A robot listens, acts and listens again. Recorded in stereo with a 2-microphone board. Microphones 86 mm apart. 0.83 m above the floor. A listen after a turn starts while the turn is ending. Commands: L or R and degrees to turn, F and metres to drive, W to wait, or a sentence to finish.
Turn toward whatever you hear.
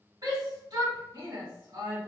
R50
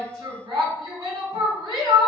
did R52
R75
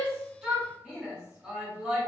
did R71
Found it: a shout, straight ahead.